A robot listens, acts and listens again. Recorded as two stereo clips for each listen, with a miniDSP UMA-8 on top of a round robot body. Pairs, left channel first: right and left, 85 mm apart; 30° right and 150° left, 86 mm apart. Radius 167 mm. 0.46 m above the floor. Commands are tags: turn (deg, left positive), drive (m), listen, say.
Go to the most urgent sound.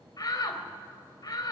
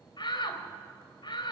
<turn deg="-50"/>
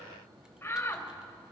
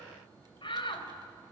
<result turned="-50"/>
<turn deg="-30"/>
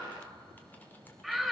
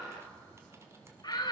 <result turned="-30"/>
<drive m="1.0"/>
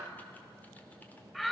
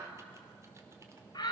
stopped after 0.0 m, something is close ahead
<say>Blocked. The shout is further on, straight ahead.</say>